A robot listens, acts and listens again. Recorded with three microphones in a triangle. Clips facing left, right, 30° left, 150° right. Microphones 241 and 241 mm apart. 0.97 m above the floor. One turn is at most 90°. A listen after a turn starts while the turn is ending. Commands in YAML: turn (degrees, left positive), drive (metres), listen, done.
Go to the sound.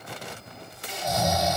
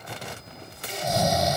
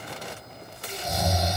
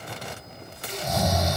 turn: -90
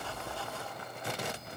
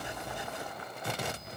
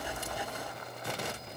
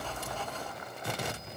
turn: -55
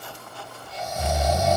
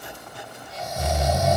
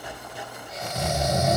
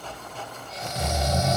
turn: -10
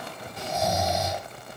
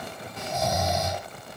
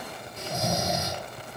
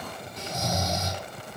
drive: 1.0
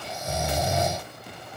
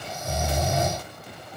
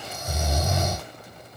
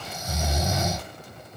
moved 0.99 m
drive: 1.0
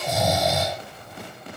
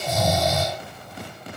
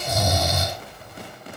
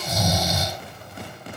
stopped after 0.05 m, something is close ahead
done: "Arrived at the snoring, straight ahead."